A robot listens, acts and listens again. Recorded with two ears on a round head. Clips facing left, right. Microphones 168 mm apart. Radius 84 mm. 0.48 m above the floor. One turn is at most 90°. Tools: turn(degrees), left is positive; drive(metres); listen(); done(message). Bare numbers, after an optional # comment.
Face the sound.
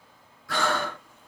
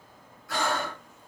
# The breathing: about 60° left or 120° left.
turn(60)
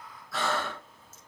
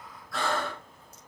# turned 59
done("Facing the breathing, 1 to 2 m away.")